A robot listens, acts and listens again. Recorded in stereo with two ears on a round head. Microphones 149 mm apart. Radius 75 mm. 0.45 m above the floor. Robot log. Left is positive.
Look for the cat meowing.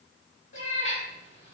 note: The cat meowing: about 40° left or 140° left.
cmd yaw +40
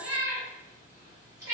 note: So it is at 25° right.
cmd yaw -25
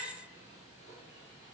cmd idle
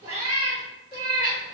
note: The cat meowing is now 25° right.
cmd yaw -25
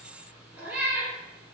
note: The cat meowing is now 15° right.
cmd yaw -15
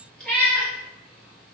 end: Found it: a cat meowing, straight ahead, 2 to 4 m away.